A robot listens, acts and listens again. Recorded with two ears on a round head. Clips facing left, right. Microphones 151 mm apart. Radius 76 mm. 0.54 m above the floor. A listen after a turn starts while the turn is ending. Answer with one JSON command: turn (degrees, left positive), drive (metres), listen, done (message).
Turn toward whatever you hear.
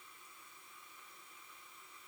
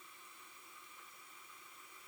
{"listen": true}
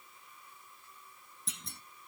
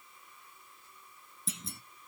{"turn": 30}
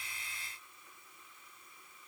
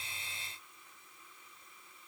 {"listen": true}
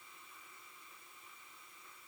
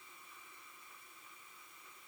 {"done": "I heard a clunk, but can't make it out now. It was about 30° right or 150° left."}